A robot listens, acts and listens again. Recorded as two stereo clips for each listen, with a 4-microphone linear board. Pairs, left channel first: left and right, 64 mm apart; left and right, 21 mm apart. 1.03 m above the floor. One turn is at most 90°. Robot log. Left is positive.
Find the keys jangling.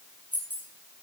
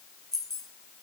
note: The keys jangling: about 30° left or 150° left.
cmd yaw +30
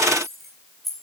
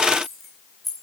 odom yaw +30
end: Facing the keys jangling, over 4 m away.